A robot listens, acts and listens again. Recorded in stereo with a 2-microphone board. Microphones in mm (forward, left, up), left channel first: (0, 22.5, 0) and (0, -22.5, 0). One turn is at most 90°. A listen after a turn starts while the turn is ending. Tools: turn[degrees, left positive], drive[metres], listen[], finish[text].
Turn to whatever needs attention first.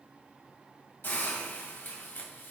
Action: listen[]
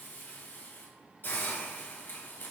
Action: listen[]
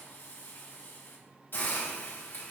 Action: finish[I can't make out anything urgent to turn to.]